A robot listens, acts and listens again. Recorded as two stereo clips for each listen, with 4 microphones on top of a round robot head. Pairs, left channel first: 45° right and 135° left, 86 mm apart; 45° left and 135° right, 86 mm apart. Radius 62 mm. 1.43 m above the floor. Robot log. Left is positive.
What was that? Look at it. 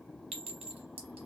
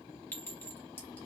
note: The clink: 115° left.
cmd yaw +115
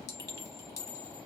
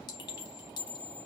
end: Facing the clink.